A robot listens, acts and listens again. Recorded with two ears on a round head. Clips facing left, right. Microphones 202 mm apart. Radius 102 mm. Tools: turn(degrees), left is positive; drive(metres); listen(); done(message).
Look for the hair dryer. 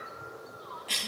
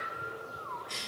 listen()
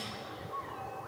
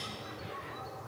listen()
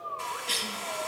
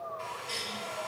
turn(degrees=70)
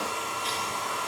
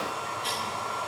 turn(degrees=40)
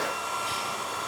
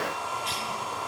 turn(degrees=20)
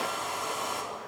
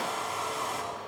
done("Found it: a hair dryer, straight ahead.")